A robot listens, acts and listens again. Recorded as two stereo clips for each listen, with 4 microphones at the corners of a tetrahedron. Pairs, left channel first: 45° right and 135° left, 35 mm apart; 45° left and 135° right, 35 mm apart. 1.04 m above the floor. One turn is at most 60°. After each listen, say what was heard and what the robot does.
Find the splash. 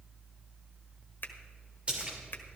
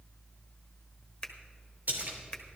The splash: 165° right. Turn 60° right.
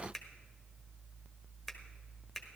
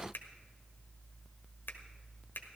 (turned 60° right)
Nothing new. It was at 105° right. Turn 60° right.
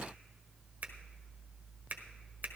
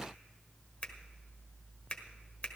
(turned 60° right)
Nothing new. It was at 45° right. Turn 45° right.
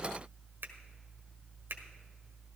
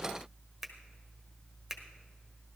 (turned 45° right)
Facing where the splash came from. I can't hear it now.